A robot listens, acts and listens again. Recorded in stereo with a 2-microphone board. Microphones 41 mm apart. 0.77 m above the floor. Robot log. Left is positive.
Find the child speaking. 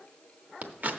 cmd idle
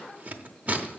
cmd idle
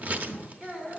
cmd yaw -30
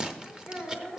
note: So it is at 135° right.
cmd yaw -135
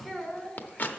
end: Facing the child speaking, 2 to 4 m away.